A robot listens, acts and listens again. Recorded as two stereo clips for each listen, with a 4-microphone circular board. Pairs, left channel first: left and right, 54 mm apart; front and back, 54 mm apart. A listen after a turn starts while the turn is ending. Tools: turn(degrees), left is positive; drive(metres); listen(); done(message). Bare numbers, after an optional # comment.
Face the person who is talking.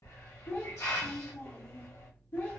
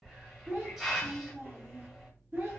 # The child speaking: 130° left.
turn(130)
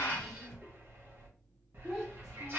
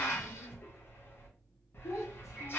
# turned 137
listen()
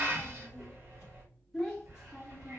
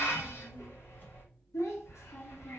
done("Found it: a child speaking, straight ahead, under 1 m away.")